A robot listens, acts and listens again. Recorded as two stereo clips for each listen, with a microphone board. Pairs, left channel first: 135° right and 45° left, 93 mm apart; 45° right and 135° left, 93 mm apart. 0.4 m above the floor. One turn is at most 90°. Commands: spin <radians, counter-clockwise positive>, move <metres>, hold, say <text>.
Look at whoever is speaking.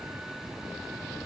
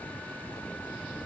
hold
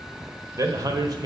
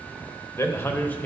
spin 0.52
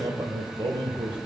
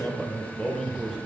spin 0.87
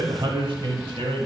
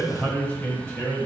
spin 0.61
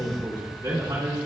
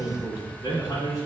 spin -0.26
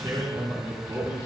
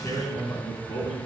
say Found it: a man speaking, straight ahead, 2 to 4 m away.